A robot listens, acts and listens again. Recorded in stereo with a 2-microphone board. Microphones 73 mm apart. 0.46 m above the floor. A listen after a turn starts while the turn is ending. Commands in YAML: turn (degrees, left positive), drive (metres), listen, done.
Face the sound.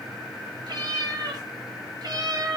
turn: -60
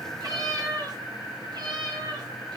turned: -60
turn: -75
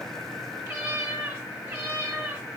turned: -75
turn: -30
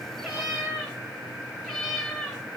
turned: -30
done: "Found it: a cat meowing, straight ahead."